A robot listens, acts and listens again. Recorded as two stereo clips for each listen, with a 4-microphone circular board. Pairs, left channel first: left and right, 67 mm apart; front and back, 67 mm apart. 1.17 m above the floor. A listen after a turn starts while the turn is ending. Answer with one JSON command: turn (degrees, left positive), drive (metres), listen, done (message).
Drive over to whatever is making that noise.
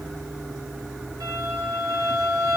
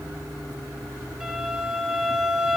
{"turn": -100}
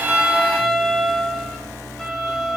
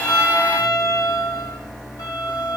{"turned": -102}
{"drive": 1.0}
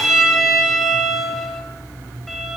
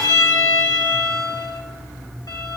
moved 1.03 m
{"drive": 1.0}
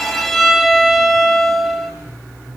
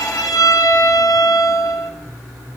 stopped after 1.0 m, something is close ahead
{"done": "I am next to the violin."}